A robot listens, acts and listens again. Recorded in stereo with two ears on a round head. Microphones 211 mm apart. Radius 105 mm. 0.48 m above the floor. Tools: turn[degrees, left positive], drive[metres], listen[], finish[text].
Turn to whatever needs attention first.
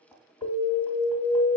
Thought: The alarm: about 50° left or 130° left.
Action: turn[50]
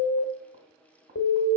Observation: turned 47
Thought: So it is at 80° left.
Action: turn[80]
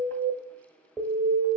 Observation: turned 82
Action: finish[Found it: an alarm, straight ahead, 1 to 2 m away.]